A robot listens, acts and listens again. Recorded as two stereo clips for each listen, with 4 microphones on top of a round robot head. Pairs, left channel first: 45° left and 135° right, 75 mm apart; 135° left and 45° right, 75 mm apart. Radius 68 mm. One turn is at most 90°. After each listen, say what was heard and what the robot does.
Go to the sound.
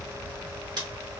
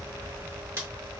The scissors: 105° right. Turn 90° right.
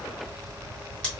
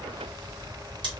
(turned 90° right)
Nothing new. It was at 15° right. Turn 15° right.
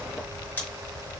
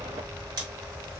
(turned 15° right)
The scissors is now 20° right. Turn 20° right.
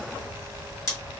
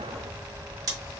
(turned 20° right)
Drive 1.0 m forward.
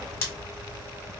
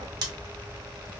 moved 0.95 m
The scissors is now 10° right. Turn 10° right.
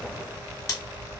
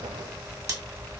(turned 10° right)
Drive 1.0 m forward.
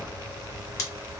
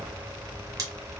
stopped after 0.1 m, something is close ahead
I am next to the scissors.